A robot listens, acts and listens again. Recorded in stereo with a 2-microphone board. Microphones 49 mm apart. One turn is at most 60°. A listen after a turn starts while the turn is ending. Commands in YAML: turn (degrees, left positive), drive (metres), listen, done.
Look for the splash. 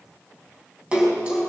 turn: -20
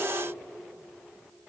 listen: true
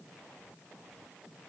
done: "I heard a splash, but can't make it out now. It was about straight ahead or 140° right."